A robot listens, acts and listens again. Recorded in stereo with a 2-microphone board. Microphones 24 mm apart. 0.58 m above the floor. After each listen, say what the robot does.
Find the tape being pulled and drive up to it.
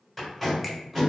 Turn 30° right.
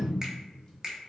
Keep listening.
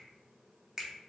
Keep listening.
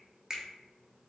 I heard tape being pulled, but can't make it out now. It was about 25° left or 145° right. I did not reach it.